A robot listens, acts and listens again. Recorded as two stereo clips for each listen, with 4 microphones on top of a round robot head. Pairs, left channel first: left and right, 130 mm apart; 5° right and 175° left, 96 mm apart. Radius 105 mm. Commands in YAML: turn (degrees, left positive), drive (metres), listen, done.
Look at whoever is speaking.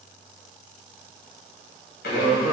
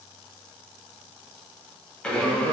turn: -140
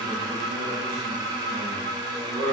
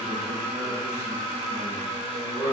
turn: -55
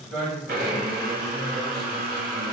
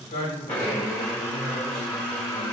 done: "Facing the man speaking, 1 to 2 m away."